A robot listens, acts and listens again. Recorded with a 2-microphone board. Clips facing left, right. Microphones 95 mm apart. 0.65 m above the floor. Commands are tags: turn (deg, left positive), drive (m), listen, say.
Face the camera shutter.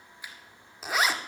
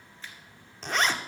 <turn deg="30"/>
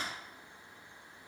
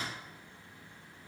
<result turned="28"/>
<listen/>
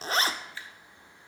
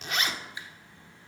<turn deg="-15"/>
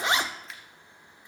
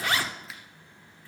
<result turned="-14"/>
<say>Facing the camera shutter, 1 to 2 m away.</say>